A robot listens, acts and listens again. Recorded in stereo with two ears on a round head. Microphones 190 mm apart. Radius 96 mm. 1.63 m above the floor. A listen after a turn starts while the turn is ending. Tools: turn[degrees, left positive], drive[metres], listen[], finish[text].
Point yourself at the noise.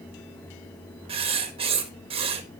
Thought: The writing: about 30° right or 150° right.
Action: turn[-30]
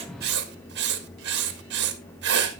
Thought: So it is at 115° right.
Action: turn[-115]
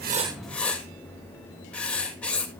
Action: finish[Found it: writing, straight ahead.]